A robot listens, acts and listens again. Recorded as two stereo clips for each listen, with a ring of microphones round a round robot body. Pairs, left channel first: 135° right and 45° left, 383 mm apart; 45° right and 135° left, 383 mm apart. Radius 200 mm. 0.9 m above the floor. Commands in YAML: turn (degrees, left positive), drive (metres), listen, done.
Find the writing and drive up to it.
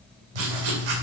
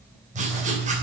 turn: 65
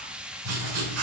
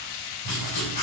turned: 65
drive: 1.0
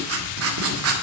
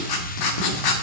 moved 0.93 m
turn: -10
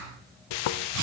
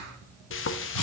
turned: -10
drive: 1.0
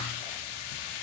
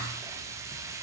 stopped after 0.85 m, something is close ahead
listen: true
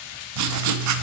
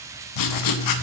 done: "I am next to the writing."